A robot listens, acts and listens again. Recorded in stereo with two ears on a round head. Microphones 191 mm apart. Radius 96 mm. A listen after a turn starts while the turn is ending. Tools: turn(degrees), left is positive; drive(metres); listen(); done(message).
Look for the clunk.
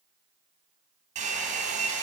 listen()
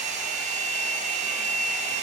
listen()
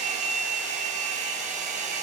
done("I can't make out a clunk to turn to.")